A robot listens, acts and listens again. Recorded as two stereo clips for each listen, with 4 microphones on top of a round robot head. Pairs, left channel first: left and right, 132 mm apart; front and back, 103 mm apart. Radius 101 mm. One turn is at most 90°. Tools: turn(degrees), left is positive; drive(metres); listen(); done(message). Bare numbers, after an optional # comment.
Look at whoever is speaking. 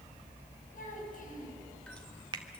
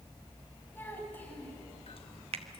# The child speaking: 70° left.
turn(70)
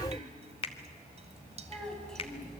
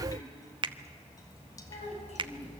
done("Facing the child speaking.")